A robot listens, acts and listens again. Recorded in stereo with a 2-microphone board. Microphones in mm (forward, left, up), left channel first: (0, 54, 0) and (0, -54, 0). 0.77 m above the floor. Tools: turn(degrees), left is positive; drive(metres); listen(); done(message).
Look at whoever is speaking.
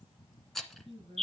turn(degrees=-50)
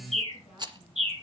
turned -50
listen()
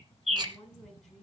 done("Found it: a woman speaking, straight ahead, over 4 m away.")